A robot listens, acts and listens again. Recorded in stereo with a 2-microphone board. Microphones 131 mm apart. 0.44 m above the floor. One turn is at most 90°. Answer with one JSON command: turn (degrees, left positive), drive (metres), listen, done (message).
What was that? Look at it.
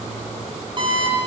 {"turn": -35}
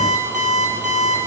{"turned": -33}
{"turn": -90}
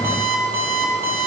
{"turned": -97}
{"turn": -15}
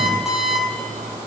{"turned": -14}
{"done": "Found it: an alarm clock, straight ahead, over 4 m away."}